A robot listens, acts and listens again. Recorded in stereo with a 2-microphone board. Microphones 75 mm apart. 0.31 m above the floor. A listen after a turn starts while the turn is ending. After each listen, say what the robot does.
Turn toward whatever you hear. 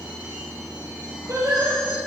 Turn 40° right.
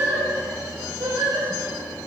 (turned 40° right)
Turn 105° right.
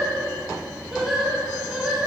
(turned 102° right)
Turn 10° right.
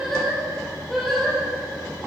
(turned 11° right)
Found it: singing, straight ahead.